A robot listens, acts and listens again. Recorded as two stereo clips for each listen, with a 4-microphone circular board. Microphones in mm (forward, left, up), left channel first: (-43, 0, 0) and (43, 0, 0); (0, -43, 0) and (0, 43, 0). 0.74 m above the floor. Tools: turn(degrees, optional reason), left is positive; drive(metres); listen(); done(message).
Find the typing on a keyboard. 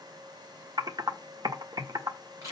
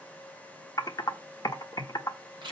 turn(degrees=-45, reason="The typing on a keyboard: 45° right.")
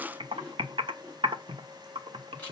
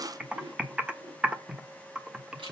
turn(degrees=10, reason="The typing on a keyboard is now 10° left.")
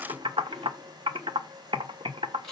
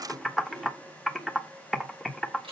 done("Facing the typing on a keyboard, 1 to 2 m away.")